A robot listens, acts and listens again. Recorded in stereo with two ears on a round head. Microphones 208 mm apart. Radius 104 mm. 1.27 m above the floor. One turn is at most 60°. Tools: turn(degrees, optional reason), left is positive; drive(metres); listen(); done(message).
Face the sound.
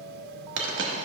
turn(degrees=-55, reason="The dropped coin: about 55° right or 125° right.")
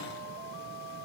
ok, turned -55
listen()
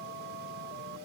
done("I heard a dropped coin, but can't make it out now. It was about straight ahead or 70° right.")